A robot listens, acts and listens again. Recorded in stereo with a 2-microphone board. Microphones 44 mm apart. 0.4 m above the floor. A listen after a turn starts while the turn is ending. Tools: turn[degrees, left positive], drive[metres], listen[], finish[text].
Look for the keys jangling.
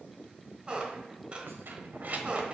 Thought: The keys jangling: about 35° right or 145° right.
Action: turn[-35]
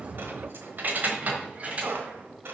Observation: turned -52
Thought: The keys jangling: about 30° right or 150° right.
Action: turn[-30]
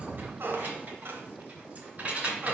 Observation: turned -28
Thought: The keys jangling: about 35° right or 145° right.
Action: turn[-35]
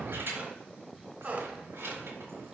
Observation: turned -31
Thought: So it is at 115° right.
Action: turn[-115]
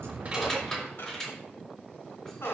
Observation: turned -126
Thought: The keys jangling is now 15° left.
Action: turn[15]
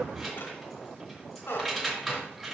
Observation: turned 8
Action: finish[Facing the keys jangling.]